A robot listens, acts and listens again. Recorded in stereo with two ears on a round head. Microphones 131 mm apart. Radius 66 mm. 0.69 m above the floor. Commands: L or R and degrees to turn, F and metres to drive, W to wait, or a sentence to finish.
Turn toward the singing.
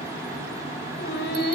L70
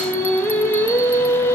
L15
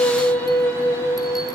L20
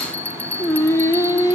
L25
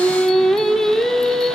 Found it: singing, straight ahead.